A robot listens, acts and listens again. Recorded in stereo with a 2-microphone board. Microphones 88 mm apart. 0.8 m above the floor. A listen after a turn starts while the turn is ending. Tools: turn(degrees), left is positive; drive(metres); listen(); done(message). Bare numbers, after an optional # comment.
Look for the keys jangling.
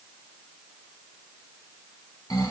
listen()
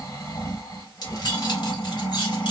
# The keys jangling: about 60° left or 120° left.
turn(60)
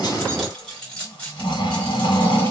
# So it is at 15° left.
turn(15)
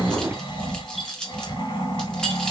# The keys jangling is now 10° left.
turn(10)
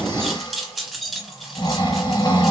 done("Facing the keys jangling, 2 to 4 m away.")